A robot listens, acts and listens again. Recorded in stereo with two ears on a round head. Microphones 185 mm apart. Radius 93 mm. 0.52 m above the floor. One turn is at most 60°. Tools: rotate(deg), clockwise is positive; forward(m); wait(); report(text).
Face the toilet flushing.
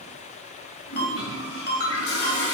rotate(-60)
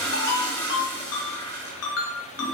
rotate(-15)
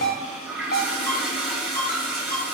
report("Found it: a toilet flushing, straight ahead, 2 to 4 m away.")